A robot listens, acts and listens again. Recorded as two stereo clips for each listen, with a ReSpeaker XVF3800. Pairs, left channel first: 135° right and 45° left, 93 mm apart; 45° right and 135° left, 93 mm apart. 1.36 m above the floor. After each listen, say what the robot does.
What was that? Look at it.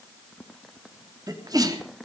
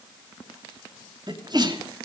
Turn 95° left.
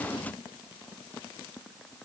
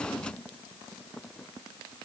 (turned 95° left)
Facing where the sneeze came from. I can't hear it now.